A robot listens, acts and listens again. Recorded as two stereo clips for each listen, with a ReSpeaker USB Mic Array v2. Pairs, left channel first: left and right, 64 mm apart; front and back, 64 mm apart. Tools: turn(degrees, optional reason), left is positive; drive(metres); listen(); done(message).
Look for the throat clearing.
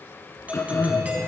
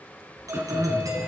turn(degrees=135, reason="The throat clearing: 135° left.")
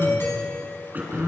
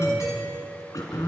turn(degrees=-30, reason="The throat clearing is now 30° right.")
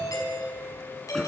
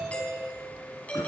listen()
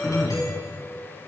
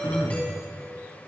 done("Facing the throat clearing, 2 to 4 m away.")